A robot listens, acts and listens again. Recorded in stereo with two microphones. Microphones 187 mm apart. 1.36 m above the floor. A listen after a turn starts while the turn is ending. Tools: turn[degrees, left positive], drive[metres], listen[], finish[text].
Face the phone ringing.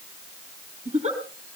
Action: listen[]
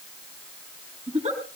Action: listen[]
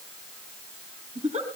Action: finish[I can't make out a phone ringing to turn to.]